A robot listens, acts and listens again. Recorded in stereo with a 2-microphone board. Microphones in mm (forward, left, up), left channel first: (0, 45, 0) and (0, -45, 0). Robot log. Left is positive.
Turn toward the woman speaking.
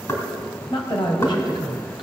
note: The woman speaking: about 60° left or 120° left.
cmd yaw +60
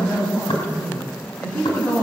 note: So it is at 15° left.
cmd yaw +15
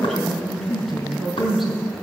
end: Found it: a woman speaking, straight ahead, over 4 m away.